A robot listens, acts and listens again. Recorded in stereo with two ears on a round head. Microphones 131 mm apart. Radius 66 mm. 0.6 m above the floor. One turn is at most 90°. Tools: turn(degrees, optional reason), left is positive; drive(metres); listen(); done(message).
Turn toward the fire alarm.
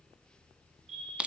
turn(degrees=-45, reason="The fire alarm: about 45° right or 135° right.")
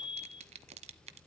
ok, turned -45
done("Facing the fire alarm, over 4 m away.")